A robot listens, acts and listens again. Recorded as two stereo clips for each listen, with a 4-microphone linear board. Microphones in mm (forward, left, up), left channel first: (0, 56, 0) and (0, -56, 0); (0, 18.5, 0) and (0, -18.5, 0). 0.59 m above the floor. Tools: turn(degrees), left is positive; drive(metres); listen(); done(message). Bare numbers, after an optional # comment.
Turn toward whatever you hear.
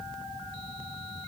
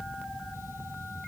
listen()
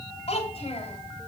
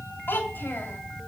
# The child speaking: about 65° left or 115° left.
turn(65)
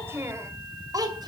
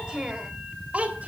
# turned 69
# So it is at 35° right.
turn(-35)
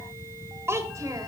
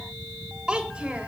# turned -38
# The child speaking is now 25° right.
turn(-25)
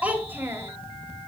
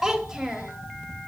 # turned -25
# The child speaking is now 20° right.
turn(-20)
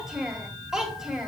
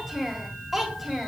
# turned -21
done("Found it: a child speaking, straight ahead, 2 to 4 m away.")